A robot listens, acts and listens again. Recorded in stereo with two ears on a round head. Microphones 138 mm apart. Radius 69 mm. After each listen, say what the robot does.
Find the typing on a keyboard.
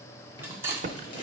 Turn 55° right.
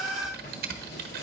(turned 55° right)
Turn 70° right.
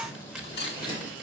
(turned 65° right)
Facing the typing on a keyboard, under 1 m away.